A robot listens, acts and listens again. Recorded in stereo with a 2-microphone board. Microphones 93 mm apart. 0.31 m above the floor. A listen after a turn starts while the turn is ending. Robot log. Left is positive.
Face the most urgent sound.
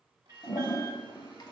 note: The alarm: about 40° right or 140° right.
cmd yaw -40
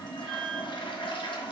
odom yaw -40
end: Facing the alarm.